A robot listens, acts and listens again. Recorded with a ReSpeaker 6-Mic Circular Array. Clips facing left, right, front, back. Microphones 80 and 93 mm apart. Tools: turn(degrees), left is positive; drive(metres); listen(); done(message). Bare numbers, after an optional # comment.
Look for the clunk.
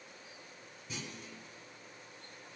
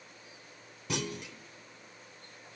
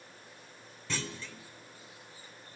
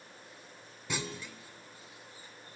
# The clunk: 100° right.
turn(-100)
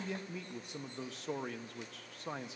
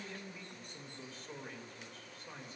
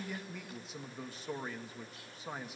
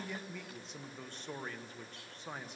done("I heard a clunk from this way, but can't make it out now.")